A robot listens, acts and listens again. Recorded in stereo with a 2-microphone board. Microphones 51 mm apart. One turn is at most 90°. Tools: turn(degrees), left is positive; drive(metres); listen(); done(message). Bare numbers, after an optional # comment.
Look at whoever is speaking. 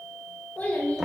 # The child speaking: about 35° left or 145° left.
turn(35)
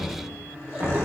listen()
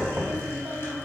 listen()
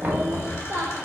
# So it is at 60° right.
turn(-60)
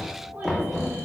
listen()
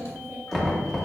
listen()
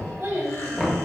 # The child speaking is now 45° right.
turn(-45)
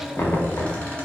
listen()
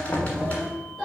done("Found it: a child speaking, straight ahead, 2 to 4 m away.")